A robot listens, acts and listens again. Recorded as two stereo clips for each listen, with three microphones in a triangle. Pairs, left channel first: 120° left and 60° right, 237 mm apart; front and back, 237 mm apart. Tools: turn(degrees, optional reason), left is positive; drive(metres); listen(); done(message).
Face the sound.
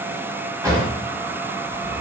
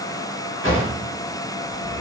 turn(degrees=15, reason="The drawer: 15° left.")
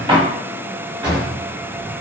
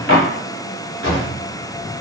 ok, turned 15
done("Facing the drawer, 1 to 2 m away.")